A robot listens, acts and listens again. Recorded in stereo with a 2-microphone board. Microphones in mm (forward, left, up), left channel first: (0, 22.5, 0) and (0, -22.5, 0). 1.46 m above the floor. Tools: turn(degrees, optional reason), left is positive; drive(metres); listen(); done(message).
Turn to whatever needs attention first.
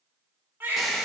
turn(degrees=-55, reason="The baby crying: about 55° right or 125° right.")
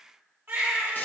turn(degrees=-65, reason="So it is at 65° right.")
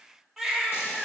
turn(degrees=-10, reason="The baby crying is now 10° right.")
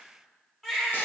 done("Found it: a baby crying, straight ahead.")